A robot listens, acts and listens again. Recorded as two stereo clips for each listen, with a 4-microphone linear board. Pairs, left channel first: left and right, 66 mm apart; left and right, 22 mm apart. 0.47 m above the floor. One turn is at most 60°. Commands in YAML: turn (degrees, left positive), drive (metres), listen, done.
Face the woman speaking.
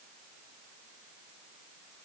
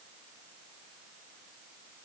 listen: true
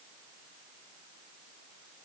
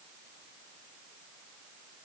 listen: true
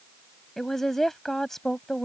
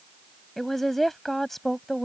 turn: 30
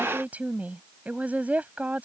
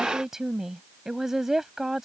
turn: -25
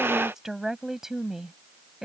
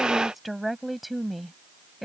done: "Found it: a woman speaking, straight ahead."